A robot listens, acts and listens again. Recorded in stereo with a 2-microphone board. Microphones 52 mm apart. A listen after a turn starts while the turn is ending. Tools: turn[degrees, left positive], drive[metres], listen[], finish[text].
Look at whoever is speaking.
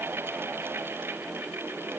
Action: listen[]
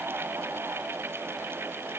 Action: listen[]
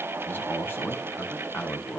Thought: The man speaking: about 45° left or 135° left.
Action: turn[45]
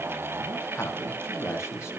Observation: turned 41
Thought: So it is at 90° left.
Action: turn[90]
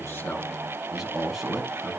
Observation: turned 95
Action: finish[Facing the man speaking.]